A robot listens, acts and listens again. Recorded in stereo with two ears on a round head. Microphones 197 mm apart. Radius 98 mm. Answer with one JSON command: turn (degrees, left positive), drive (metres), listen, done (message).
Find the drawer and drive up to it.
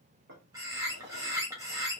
{"turn": -55}
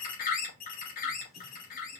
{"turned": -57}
{"listen": true}
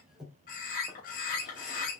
{"drive": 1.0}
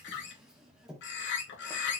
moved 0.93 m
{"drive": 1.0}
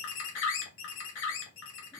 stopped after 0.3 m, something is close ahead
{"listen": true}
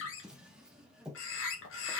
{"done": "I am next to the drawer."}